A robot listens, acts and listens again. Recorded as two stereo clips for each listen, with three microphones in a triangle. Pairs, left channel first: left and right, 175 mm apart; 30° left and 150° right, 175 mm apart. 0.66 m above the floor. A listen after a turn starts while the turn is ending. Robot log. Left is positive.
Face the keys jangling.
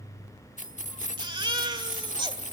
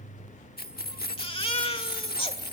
note: The keys jangling: 50° left.
cmd yaw +50
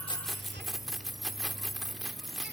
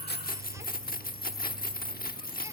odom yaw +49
end: Facing the keys jangling.